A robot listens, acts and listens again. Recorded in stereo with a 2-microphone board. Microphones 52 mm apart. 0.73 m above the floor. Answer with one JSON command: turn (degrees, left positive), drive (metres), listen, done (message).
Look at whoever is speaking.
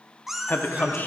{"turn": 35}
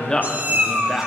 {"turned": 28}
{"turn": 15}
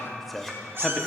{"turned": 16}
{"done": "Facing the man speaking, under 1 m away."}